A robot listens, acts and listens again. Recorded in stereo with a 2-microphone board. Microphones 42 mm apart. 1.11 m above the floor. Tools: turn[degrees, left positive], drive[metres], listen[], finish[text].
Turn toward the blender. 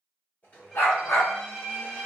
Thought: The blender: about 45° left or 135° left.
Action: turn[45]
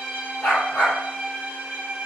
Action: listen[]
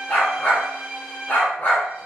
Action: listen[]
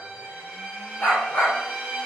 Action: finish[I heard a blender, but can't make it out now. It was about straight ahead or 90° left.]